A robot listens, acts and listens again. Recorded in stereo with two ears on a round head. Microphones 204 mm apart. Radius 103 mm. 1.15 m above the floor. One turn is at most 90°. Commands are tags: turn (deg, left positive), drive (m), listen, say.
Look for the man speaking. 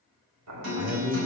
<turn deg="-30"/>
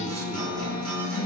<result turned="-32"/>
<listen/>
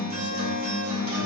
<listen/>
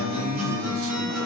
<turn deg="-90"/>
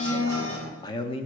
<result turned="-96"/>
<turn deg="25"/>
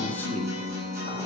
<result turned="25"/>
<listen/>
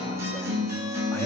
<listen/>
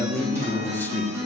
<turn deg="10"/>
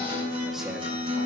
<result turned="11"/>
<listen/>
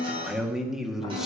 <say>Found it: a man speaking, straight ahead.</say>